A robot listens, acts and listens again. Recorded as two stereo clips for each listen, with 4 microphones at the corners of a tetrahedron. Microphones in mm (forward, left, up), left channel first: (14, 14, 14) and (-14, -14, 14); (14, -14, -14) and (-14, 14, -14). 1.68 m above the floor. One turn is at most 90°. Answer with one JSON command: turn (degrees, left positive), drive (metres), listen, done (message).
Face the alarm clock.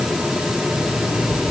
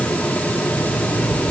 {"turn": 15}
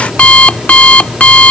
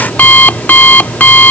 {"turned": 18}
{"done": "Facing the alarm clock."}